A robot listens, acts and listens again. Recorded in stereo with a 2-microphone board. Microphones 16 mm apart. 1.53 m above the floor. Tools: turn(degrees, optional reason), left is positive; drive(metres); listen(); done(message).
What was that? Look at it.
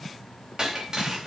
turn(degrees=-50, reason="The breaking glass: about 50° right or 130° right.")
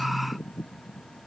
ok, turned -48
listen()
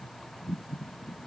done("I heard breaking glass, but can't make it out now. It was about 5° right or 80° right.")